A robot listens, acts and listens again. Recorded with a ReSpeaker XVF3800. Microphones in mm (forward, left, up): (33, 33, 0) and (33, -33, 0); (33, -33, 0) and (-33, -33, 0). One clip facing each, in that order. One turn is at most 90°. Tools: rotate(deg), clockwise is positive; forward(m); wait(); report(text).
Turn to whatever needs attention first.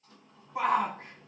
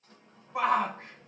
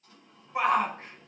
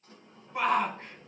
rotate(80)
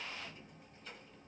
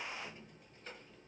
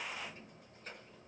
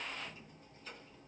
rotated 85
wait()
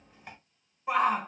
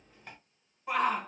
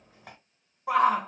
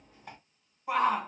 report("Facing the shout.")